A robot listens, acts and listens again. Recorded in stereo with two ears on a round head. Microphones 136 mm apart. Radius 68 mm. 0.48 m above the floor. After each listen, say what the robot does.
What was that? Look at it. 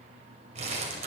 Turn 45° right.
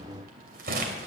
Turn 85° right.
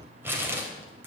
Turn 15° right.
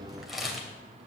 Facing the crumpling, 2 to 4 m away.